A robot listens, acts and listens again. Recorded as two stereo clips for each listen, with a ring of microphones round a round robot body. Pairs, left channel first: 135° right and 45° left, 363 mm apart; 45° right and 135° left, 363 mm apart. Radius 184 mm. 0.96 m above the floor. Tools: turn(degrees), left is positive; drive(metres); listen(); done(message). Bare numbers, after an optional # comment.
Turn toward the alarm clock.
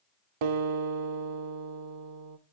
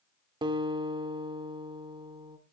listen()
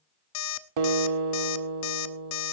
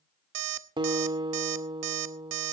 # The alarm clock: 175° left.
turn(175)
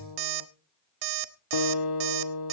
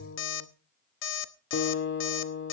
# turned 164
# The alarm clock is now 15° left.
turn(15)
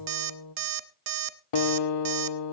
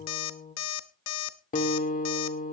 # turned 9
done("Facing the alarm clock, under 1 m away.")